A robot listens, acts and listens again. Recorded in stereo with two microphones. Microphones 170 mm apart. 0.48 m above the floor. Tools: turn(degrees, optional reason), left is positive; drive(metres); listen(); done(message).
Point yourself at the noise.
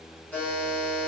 turn(degrees=30)
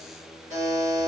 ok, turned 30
turn(degrees=-20, reason="So it is at 20° right.")
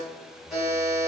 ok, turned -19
done("Found it: a buzzer, straight ahead, 1 to 2 m away.")